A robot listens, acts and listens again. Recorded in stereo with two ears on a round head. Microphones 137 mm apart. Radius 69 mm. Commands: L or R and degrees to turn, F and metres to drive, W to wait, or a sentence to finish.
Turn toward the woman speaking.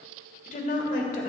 L50
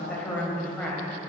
L10
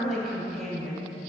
Found it: a woman speaking, straight ahead.